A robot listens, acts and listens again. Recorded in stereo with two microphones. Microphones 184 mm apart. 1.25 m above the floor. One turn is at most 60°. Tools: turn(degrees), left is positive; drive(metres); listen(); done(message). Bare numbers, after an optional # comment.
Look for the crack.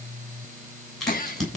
turn(30)
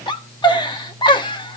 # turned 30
listen()
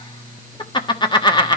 done("I heard a crack, but can't make it out now. It was about 25° right or 145° left.")